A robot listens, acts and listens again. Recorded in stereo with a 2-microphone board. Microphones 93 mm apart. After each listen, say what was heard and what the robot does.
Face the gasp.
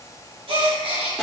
The gasp: about 75° right or 105° right. Turn 75° right.
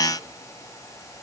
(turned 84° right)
Keep listening.
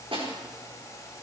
I heard a gasp, but can't make it out now. It was about 10° left or 20° right.